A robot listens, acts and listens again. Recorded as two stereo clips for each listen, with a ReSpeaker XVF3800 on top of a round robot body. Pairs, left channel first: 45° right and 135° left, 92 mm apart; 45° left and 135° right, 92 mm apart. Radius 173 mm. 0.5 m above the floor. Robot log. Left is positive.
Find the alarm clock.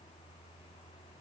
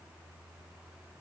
cmd idle
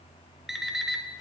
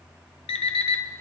note: The alarm clock: 50° left.
cmd yaw +50
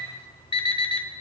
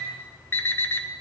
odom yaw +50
note: The alarm clock is now 25° right.
cmd yaw -25
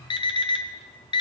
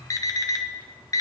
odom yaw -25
note: The alarm clock is now 10° right.
cmd yaw -10
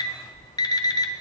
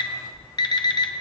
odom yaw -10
end: Facing the alarm clock, under 1 m away.